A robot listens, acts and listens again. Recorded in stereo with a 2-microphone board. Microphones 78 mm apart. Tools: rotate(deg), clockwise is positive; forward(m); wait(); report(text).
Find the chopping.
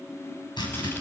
rotate(-75)
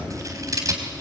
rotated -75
wait()
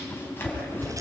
rotate(-30)
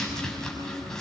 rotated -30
report("Facing the chopping, over 4 m away.")